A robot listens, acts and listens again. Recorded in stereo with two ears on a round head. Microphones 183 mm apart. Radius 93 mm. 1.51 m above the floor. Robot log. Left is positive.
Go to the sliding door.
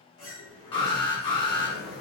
cmd yaw +90
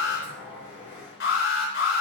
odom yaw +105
note: So it is at 10° right.
cmd yaw -10
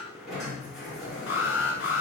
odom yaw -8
cmd fwd 1.0
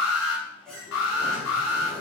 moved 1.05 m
cmd fwd 1.0
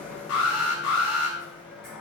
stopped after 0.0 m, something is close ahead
end: Something is in my way. I am facing the sliding door but have not reached it.